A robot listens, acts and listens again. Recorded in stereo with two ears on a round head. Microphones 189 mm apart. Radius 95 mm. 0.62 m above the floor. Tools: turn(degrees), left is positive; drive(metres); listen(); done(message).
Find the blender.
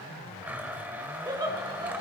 turn(degrees=-30)
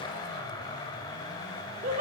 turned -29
turn(degrees=20)
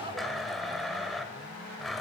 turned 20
done("Facing the blender.")